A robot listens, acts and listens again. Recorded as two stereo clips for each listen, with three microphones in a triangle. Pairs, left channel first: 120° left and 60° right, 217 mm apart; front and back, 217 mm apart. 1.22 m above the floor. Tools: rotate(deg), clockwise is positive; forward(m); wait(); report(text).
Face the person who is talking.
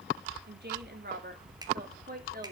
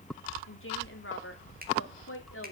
rotate(15)
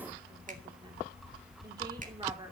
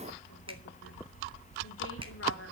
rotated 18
wait()
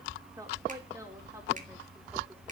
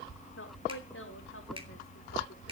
wait()
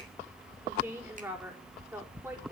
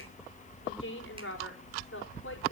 rotate(-20)
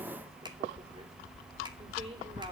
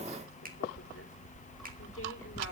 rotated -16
wait()
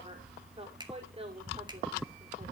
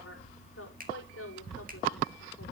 report("Found it: a woman speaking, straight ahead, over 4 m away.")